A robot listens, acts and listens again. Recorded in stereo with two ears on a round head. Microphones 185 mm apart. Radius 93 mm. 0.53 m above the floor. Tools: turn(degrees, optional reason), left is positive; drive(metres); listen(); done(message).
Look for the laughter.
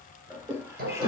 turn(degrees=-15, reason="The laughter: about 15° right or 165° right.")
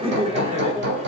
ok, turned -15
turn(degrees=-30, reason="The laughter: about 30° right or 150° right.")
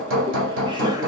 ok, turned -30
listen()
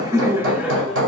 done("Found it: laughter, straight ahead.")